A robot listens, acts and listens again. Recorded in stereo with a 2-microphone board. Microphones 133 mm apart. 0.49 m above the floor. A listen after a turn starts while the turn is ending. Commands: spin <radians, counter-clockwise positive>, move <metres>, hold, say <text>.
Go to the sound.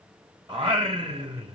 spin -0.70
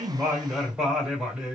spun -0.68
move 1.0
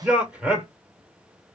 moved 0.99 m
spin -0.17
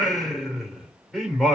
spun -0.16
move 1.0
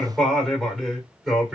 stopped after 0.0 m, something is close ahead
say Arrived at the singing, straight ahead.